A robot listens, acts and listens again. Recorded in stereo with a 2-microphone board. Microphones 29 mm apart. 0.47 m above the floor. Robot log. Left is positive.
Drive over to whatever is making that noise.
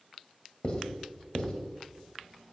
note: The writing: about 35° left or 145° left.
cmd yaw +35
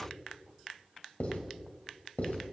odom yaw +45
note: So it is at 100° left.
cmd yaw +100
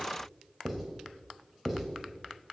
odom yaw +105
cmd fwd 1.0
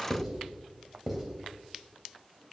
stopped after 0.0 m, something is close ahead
note: The writing is now 10° right.
cmd yaw -10
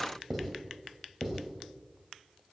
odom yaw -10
end: Blocked. The writing is further on, straight ahead.